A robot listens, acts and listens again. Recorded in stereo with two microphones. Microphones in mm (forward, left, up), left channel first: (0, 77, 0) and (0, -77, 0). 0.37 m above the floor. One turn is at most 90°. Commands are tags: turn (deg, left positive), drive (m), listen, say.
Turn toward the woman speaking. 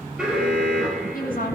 <turn deg="65"/>
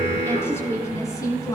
<turn deg="25"/>
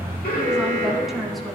<say>Found it: a woman speaking, straight ahead.</say>